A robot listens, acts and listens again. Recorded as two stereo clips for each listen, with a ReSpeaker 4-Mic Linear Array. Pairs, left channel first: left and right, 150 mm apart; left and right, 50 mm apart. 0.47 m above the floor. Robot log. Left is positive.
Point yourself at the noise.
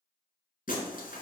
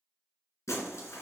note: The breaking glass: about 70° left or 110° left.
cmd yaw +70
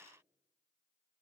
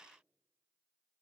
cmd idle
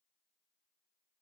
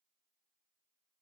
end: I heard breaking glass, but can't make it out now. It was about straight ahead or 40° left.